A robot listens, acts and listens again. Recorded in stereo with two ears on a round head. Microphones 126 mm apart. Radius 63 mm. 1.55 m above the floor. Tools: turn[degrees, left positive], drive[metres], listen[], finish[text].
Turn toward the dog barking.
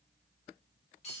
Action: listen[]
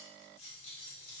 Action: listen[]
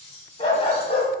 Thought: The dog barking: about 45° left or 135° left.
Action: turn[45]
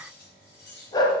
Thought: So it is at 30° left.
Action: turn[30]
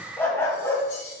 Thought: The dog barking is now 20° left.
Action: turn[20]
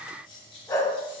Thought: The dog barking is now 20° left.
Action: turn[20]
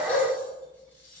Action: finish[Found it: a dog barking, straight ahead, 2 to 4 m away.]